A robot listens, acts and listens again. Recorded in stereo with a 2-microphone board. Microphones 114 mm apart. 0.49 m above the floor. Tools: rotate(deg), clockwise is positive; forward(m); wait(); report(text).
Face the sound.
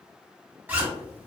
rotate(15)
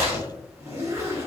rotate(150)
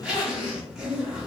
report("Facing the zipper, under 1 m away.")